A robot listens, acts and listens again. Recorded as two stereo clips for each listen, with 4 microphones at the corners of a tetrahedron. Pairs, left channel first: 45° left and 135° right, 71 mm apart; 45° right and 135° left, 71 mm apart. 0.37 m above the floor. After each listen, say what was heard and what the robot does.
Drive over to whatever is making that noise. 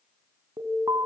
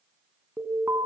The alarm: 170° right. Turn 170° right.
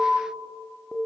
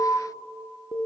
The alarm is now 40° right. Turn 40° right.
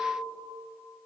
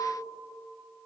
Keep listening.
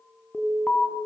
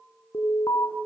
The alarm is now 30° right. Turn 30° right.
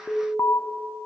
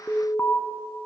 Drive 1.0 m forward.
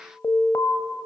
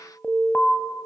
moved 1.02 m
The alarm is now 15° left. Turn 15° left.
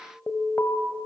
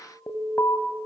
Drive 1.0 m forward.
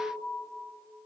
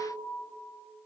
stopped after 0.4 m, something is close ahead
Keep listening.
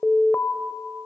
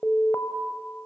Arrived at the alarm, straight ahead.